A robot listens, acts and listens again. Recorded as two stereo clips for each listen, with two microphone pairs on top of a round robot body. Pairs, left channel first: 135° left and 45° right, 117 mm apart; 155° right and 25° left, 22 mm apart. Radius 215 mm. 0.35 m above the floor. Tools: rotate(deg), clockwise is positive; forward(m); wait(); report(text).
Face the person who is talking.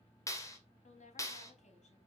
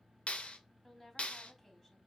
rotate(-125)
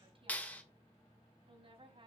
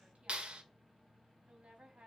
rotate(10)
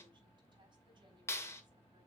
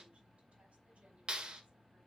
wait()
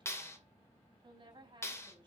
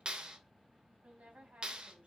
report("Found it: a woman speaking, straight ahead.")